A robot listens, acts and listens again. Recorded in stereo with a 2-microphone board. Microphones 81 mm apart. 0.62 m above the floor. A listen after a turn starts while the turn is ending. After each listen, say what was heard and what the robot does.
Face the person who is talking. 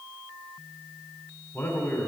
The man speaking: about 30° left or 150° left. Turn 30° left.
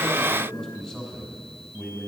So it is at 10° left. Turn 10° left.
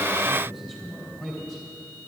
Facing the man speaking.